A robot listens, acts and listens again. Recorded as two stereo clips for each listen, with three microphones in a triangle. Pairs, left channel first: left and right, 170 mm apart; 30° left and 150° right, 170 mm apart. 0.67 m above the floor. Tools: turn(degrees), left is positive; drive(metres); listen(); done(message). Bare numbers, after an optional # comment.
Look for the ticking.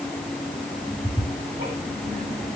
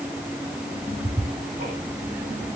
# The ticking: 115° right.
turn(-115)
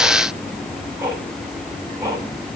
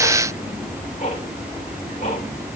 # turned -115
# The ticking is now 15° right.
turn(-15)
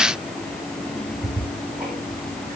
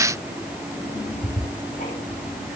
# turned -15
done("Facing the ticking, over 4 m away.")